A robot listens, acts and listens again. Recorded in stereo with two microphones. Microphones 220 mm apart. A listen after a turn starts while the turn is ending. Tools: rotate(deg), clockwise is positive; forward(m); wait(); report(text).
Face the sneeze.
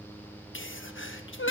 rotate(-65)
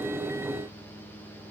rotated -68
wait()
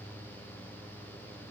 report("I heard a sneeze, but can't make it out now. It was about 5° right or 50° left.")